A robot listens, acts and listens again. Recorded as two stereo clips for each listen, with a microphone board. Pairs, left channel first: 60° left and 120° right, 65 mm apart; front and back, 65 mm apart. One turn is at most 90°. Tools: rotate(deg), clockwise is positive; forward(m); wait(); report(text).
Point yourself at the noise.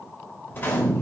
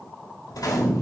report("Facing the gunshot.")